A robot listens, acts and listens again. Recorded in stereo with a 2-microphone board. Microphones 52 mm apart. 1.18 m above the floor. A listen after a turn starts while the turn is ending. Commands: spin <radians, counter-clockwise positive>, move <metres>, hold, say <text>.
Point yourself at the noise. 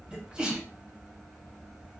spin -0.35
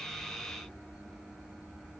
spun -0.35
hold
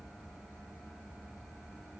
say I heard a sneeze, but can't make it out now. It was about straight ahead or 140° right.